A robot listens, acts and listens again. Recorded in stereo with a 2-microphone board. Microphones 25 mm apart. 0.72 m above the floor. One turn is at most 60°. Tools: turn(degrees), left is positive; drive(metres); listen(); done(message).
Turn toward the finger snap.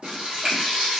turn(degrees=-40)
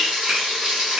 listen()
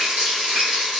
listen()
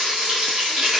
done("I heard a finger snap, but can't make it out now. It was about straight ahead or 100° right.")